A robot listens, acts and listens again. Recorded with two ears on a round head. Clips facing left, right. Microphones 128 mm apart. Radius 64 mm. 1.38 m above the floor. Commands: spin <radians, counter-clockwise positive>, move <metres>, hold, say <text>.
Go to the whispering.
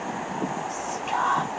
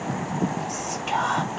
spin -0.70
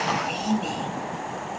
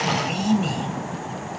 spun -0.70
move 1.0
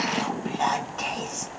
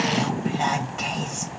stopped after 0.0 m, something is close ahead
say Blocked. The whispering is further on, straight ahead.